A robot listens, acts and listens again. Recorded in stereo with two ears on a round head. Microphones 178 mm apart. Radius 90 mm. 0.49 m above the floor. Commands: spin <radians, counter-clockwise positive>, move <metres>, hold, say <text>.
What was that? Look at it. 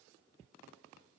hold
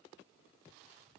hold
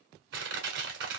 spin -1.05
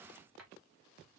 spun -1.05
hold
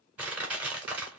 spin -0.17
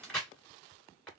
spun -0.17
say Facing the crushing, 1 to 2 m away.